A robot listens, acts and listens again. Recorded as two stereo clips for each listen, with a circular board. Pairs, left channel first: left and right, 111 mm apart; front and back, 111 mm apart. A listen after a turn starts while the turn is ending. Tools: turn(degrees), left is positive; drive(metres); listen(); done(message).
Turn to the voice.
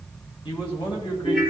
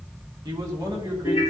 turn(degrees=130)
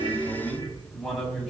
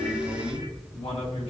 done("Facing the man speaking.")